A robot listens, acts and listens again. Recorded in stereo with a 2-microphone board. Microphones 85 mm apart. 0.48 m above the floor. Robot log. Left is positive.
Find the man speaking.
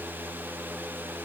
cmd idle
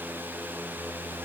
cmd idle
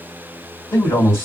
note: The man speaking: about 30° left or 150° left.
cmd yaw +30
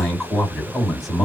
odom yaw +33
end: Facing the man speaking.